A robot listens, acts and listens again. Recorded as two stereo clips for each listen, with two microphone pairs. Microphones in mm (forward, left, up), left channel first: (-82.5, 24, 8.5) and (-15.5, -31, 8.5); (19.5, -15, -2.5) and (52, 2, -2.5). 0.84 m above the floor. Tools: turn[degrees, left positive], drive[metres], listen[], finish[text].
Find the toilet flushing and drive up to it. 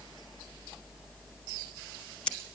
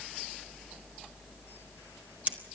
Action: listen[]
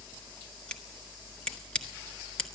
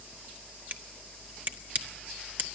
Action: listen[]
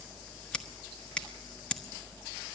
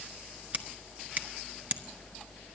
Action: finish[I can't make out a toilet flushing to turn to.]